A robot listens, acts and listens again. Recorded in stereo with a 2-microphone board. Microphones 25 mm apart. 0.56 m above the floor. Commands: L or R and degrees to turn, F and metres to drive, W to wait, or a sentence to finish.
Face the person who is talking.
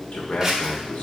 L60
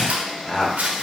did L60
L15
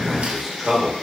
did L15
Facing the man speaking, 1 to 2 m away.